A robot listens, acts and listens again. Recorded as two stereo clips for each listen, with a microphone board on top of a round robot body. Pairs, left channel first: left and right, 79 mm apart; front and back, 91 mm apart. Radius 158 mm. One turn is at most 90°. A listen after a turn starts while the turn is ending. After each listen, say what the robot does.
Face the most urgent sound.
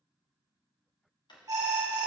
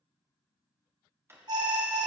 Turn 90° right.
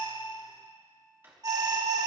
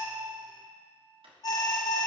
Turn 50° right.
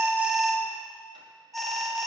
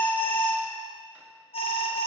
Found it: an alarm, straight ahead, 1 to 2 m away.